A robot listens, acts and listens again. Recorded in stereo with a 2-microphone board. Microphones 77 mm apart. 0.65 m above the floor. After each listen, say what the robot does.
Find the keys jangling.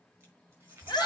Turn 30° right.
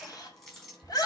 Found it: keys jangling, straight ahead.